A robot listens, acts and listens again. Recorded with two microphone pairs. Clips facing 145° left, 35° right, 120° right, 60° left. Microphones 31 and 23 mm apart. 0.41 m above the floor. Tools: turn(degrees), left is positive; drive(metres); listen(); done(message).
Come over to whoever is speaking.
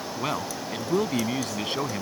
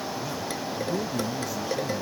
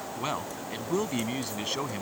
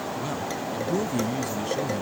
turn(degrees=175)
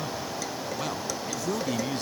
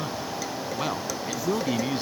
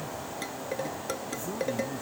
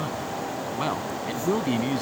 turn(degrees=35)
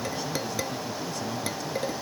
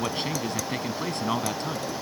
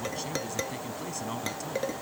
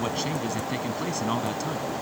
drive(metres=1.0)
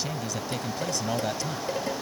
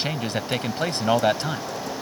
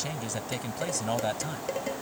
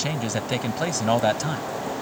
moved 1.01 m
drive(metres=1.0)
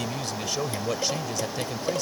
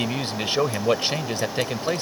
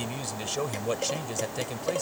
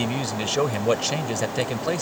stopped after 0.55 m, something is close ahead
done("I am next to the man speaking.")